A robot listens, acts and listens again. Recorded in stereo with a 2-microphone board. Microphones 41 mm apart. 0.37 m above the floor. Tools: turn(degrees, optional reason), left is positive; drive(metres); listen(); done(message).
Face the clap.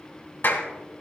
turn(degrees=60, reason="The clap: about 60° left or 120° left.")
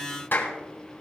turn(degrees=55, reason="So it is at 55° left.")
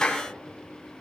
turn(degrees=20, reason="The clap is now 20° left.")
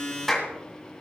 done("Facing the clap, 2 to 4 m away.")